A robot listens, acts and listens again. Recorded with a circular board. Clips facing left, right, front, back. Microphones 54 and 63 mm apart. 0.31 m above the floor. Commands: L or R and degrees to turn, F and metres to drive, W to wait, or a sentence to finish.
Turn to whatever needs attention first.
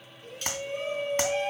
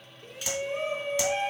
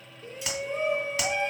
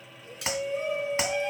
R25
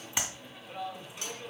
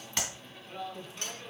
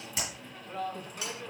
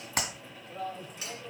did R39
L10
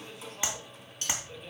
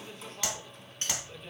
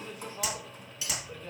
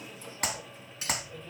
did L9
Facing the shout.